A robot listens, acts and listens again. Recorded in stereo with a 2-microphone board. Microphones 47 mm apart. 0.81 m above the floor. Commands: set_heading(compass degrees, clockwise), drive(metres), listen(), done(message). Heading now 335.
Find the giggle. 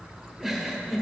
set_heading(5)
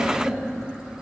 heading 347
listen()
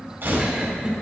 listen()
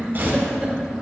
set_heading(147)
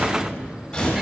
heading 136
set_heading(146)
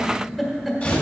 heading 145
done("Found it: a giggle, straight ahead, 1 to 2 m away.")